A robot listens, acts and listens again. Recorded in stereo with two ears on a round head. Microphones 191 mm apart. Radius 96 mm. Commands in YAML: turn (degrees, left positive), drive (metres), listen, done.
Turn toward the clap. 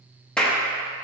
turn: 30
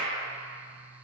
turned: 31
listen: true
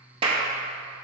turn: -25
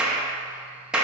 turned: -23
done: "Found it: a clap, straight ahead."